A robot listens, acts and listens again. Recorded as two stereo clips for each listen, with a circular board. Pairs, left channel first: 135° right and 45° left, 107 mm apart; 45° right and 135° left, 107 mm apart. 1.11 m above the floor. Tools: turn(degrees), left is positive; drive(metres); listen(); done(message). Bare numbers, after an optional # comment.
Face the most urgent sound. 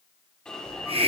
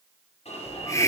# The alarm: 55° right.
turn(-55)
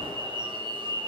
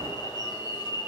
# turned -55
done("Facing the alarm.")